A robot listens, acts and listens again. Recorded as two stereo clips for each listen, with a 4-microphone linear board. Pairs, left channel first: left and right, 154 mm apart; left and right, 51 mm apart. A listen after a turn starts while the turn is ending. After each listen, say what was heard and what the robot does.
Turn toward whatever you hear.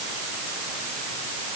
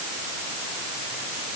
Keep listening.
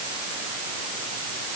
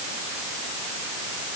Keep listening.
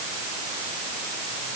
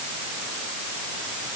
I can't make out anything to turn to.